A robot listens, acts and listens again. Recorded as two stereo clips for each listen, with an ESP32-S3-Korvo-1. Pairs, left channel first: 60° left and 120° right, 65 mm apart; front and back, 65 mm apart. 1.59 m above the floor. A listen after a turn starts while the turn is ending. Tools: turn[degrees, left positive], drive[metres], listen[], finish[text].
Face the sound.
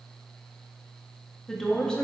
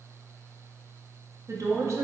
Thought: The woman speaking: 135° left.
Action: turn[135]
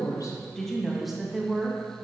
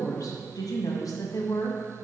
Thought: The woman speaking is now 45° right.
Action: turn[-45]
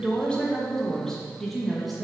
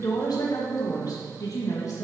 Thought: The woman speaking is now 30° right.
Action: turn[-30]
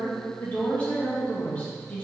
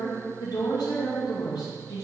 Thought: The woman speaking is now 10° right.
Action: turn[-10]
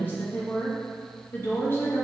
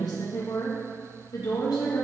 Action: finish[Found it: a woman speaking, straight ahead, 2 to 4 m away.]